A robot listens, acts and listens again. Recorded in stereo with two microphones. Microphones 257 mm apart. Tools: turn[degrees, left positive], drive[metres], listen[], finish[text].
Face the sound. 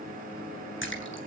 Thought: The splash: about 50° left or 130° left.
Action: turn[50]
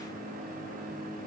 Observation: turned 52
Action: listen[]
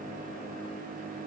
Action: finish[I heard a splash, but can't make it out now. It was about 5° right or 80° left.]